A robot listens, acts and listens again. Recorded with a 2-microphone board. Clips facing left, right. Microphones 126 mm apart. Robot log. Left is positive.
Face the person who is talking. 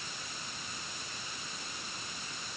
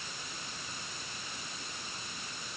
cmd idle
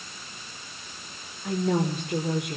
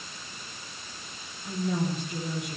cmd yaw +90
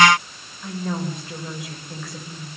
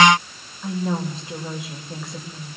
note: So it is at 15° right.
cmd yaw -15
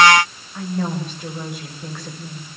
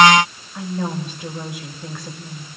end: Facing the woman speaking, over 4 m away.